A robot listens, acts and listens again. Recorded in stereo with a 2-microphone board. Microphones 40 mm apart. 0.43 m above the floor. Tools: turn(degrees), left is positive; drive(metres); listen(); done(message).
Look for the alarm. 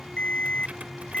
turn(degrees=30)
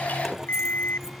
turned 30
turn(degrees=115)
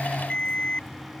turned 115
turn(degrees=20)
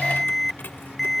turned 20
done("Facing the alarm.")